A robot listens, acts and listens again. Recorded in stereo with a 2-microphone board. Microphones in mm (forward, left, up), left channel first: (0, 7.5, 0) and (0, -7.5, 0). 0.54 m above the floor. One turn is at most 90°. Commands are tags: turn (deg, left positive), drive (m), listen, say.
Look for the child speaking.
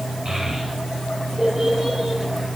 <turn deg="-55"/>
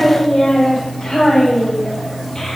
<turn deg="25"/>
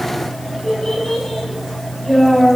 <turn deg="15"/>
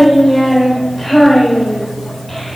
<say>Facing the child speaking.</say>